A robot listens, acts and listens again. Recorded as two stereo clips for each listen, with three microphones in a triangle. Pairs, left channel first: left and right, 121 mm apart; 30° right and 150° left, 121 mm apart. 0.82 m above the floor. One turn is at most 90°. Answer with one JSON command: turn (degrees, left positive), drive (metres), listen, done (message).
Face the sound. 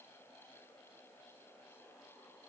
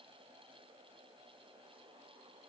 {"listen": true}
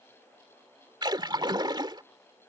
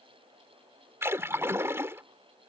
{"turn": -90}
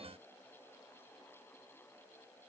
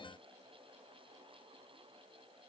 {"turn": -50}
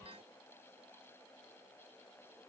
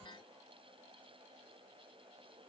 {"done": "I heard a splash from this way, but can't make it out now."}